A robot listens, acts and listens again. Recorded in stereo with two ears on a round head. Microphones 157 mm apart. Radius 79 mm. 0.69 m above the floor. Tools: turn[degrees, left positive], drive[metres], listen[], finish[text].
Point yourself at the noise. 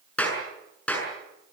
Action: turn[30]
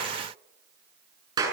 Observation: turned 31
Thought: So it is at 25° right.
Action: turn[-25]
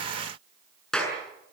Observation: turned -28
Action: finish[Facing the clap.]